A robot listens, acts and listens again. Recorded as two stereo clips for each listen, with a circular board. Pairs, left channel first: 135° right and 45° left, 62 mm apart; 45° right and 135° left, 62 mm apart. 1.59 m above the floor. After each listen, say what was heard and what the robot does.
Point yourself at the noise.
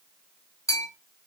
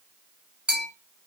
The bell: 150° right. Turn 150° right.
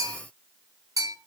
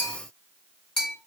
The bell is now 40° left. Turn 40° left.
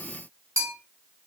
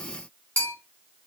The bell is now 15° left. Turn 15° left.
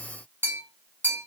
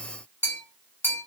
Facing the bell, 1 to 2 m away.